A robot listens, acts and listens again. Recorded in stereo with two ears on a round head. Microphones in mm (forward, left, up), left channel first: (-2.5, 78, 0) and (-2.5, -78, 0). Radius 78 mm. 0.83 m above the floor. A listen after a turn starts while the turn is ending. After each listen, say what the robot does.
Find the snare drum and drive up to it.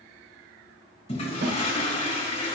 Turn 65° right.
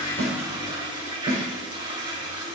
Turn 45° right.
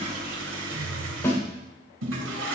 Turn 15° left.
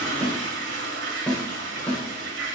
Drive 1.0 m forward.
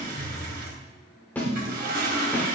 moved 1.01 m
Turn 10° left.
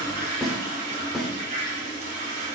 Drive 1.0 m forward.
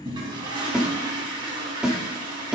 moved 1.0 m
Drive 1.0 m forward.
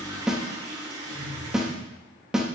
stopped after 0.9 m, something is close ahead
I am next to the snare drum.